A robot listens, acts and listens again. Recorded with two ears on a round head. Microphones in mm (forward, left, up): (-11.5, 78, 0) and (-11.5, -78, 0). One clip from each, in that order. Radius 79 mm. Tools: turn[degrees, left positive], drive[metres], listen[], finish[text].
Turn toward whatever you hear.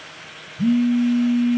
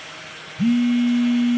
Thought: The phone buzzing: about 35° right or 145° right.
Action: turn[-35]
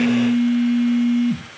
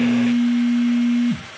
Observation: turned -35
Action: finish[Facing the phone buzzing, under 1 m away.]